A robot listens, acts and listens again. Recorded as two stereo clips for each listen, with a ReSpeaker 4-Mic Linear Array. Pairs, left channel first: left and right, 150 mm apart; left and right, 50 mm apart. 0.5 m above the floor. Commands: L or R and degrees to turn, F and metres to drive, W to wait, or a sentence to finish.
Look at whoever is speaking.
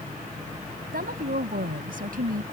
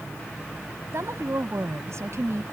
R90
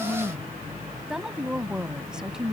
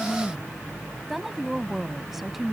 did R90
Found it: a woman speaking, straight ahead.